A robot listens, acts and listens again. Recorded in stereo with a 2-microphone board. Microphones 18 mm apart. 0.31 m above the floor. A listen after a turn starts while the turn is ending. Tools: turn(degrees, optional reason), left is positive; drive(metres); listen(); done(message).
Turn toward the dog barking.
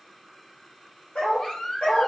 turn(degrees=90)
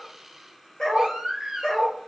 turn(degrees=40, reason="So it is at 40° left.")
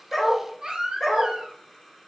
turn(degrees=15, reason="The dog barking is now 15° left.")
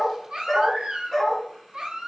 turn(degrees=30, reason="The dog barking is now 30° left.")
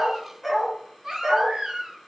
done("Found it: a dog barking, straight ahead.")